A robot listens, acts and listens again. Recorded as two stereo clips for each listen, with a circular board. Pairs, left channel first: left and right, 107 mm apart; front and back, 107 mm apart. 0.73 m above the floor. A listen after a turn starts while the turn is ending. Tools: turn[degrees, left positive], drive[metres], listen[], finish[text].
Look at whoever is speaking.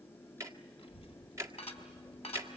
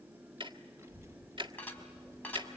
Thought: The child speaking: 115° left.
Action: turn[115]
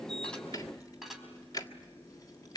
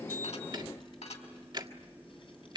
Thought: The child speaking is now 35° left.
Action: turn[35]
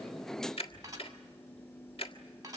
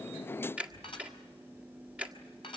Action: finish[Found it: a child speaking, straight ahead, over 4 m away.]